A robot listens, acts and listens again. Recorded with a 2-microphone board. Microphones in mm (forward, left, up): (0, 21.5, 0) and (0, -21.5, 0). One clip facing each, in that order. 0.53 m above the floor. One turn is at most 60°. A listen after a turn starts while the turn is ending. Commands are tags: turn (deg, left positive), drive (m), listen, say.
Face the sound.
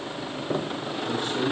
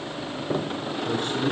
<turn deg="-60"/>
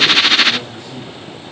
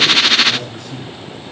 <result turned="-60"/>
<turn deg="-60"/>
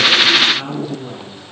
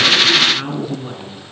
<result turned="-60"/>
<turn deg="-20"/>
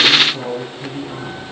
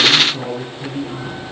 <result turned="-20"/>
<say>Facing the man speaking, over 4 m away.</say>